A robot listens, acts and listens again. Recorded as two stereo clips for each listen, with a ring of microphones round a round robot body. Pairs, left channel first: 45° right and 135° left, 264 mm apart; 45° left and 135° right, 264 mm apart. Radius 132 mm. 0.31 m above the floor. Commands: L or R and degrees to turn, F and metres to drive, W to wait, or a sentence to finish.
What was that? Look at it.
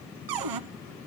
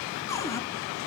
L125
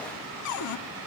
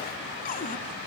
R15
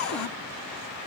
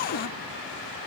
Facing the cupboard door, under 1 m away.